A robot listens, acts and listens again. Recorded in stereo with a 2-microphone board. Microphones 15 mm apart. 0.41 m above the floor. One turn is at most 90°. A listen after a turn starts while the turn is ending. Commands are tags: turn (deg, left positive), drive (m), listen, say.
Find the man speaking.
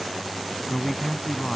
<turn deg="30"/>
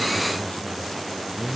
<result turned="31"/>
<turn deg="90"/>
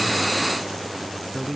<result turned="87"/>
<turn deg="20"/>
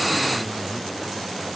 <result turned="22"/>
<listen/>
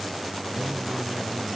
<listen/>
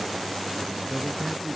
<say>Found it: a man speaking, straight ahead.</say>